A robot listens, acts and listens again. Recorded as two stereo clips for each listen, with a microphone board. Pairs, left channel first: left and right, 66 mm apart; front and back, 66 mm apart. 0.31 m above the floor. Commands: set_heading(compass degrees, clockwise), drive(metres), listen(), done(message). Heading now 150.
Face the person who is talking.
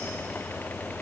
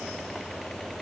listen()
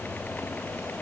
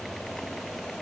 listen()
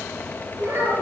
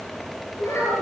set_heading(190)
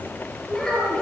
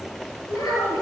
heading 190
done("Found it: a child speaking, straight ahead, over 4 m away.")